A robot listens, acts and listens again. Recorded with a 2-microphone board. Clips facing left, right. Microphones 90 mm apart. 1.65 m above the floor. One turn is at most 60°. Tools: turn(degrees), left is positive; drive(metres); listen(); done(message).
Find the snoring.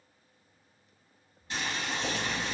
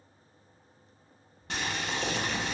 turn(degrees=60)
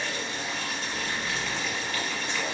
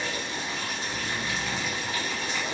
listen()
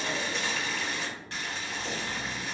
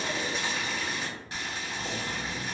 done("Facing the snoring.")